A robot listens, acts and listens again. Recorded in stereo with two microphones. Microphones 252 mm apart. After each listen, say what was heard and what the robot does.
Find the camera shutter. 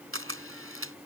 The camera shutter: about 55° right or 125° right. Turn 55° right.
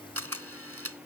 So it is at 70° right. Turn 70° right.
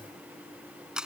Facing the camera shutter.